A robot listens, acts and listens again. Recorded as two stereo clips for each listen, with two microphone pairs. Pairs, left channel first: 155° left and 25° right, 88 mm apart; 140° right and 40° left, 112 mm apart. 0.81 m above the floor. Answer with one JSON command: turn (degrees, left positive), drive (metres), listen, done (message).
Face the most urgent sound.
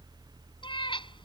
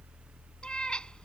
{"listen": true}
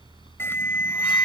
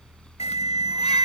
{"turn": -145}
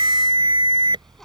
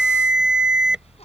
{"turn": -45}
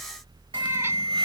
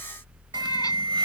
{"turn": -10}
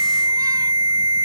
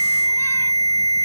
{"done": "Found it: an alarm, straight ahead."}